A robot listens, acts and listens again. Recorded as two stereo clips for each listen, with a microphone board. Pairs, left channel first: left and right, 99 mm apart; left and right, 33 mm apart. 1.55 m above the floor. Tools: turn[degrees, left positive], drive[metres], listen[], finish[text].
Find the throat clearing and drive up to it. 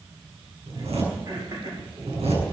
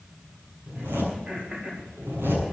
Thought: The throat clearing: about 40° right or 140° right.
Action: turn[-40]
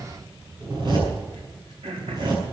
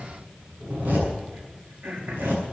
Thought: So it is at 95° right.
Action: turn[-95]
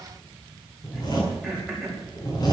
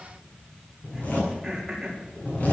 Action: drive[1.0]
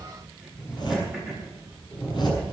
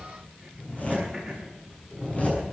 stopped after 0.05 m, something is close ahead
Action: listen[]
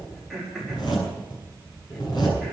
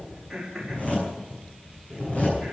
Action: finish[Something is in my way. I am facing the throat clearing but have not reached it.]